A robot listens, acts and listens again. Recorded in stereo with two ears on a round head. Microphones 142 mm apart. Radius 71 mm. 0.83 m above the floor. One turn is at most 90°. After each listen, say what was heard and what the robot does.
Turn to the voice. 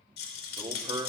The man speaking: about 25° right or 155° right. Turn 25° right.
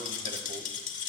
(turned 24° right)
Keep listening.
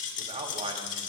The man speaking: about 40° right or 140° right. Turn 40° right.
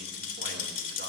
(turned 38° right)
Keep listening.
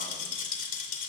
Keep listening.
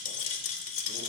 I heard a man speaking, but can't make it out now. It was about straight ahead or 105° right.